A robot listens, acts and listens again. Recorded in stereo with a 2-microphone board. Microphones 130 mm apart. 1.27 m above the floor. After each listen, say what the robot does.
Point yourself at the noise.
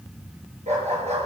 Turn 65° right.
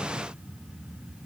Keep listening.
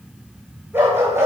Turn 20° right.
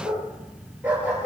Turn 15° right.
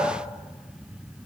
Found it: a dog barking, straight ahead.